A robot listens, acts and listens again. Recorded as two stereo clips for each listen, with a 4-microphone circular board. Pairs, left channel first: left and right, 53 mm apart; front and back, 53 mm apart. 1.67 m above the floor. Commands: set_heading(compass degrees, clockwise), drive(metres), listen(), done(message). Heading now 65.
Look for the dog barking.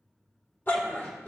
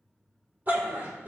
set_heading(290)
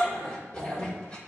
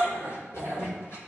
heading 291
set_heading(271)
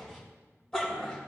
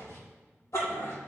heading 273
set_heading(263)
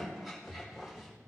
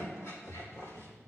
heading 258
done("Facing the dog barking, 2 to 4 m away.")